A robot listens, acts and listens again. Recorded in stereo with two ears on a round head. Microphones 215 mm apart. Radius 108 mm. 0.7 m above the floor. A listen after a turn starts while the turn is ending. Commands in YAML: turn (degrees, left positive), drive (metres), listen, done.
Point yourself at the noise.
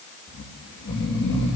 turn: 50
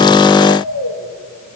turn: 80
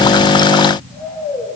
done: "Found it: snoring, straight ahead."